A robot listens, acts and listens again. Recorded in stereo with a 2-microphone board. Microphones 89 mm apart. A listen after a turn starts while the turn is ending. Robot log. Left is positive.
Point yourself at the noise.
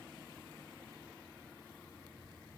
cmd idle
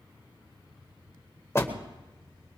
note: The door slam: about 30° left or 150° left.
cmd yaw +30
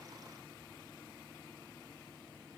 cmd idle
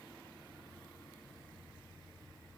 end: I heard a door slam, but can't make it out now. It was about straight ahead or 120° left.